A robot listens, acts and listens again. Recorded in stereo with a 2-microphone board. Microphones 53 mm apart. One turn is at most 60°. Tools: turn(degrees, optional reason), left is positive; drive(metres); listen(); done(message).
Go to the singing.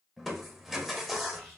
listen()
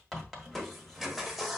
listen()
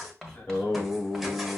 turn(degrees=45, reason="The singing: about 45° left or 135° left.")
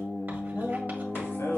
turn(degrees=60, reason="So it is at 90° left.")
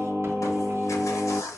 turn(degrees=30, reason="The singing is now 30° left.")
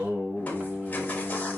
turn(degrees=-20, reason="The singing is now 20° right.")
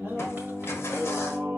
drive(metres=1.0)
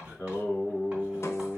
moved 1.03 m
drive(metres=1.0)
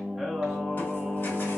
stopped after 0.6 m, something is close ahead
done("I am next to the singing.")